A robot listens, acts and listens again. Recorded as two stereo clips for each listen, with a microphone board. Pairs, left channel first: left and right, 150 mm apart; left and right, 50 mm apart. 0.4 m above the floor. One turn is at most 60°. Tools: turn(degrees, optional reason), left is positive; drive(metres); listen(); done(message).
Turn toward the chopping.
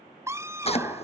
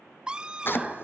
turn(degrees=40, reason="The chopping: about 40° left or 140° left.")
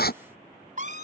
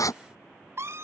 turn(degrees=60, reason="So it is at 100° left.")
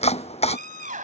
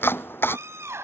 turn(degrees=40, reason="The chopping is now 40° left.")
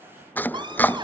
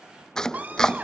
turn(degrees=10, reason="The chopping is now 10° left.")
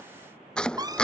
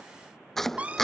done("Facing the chopping.")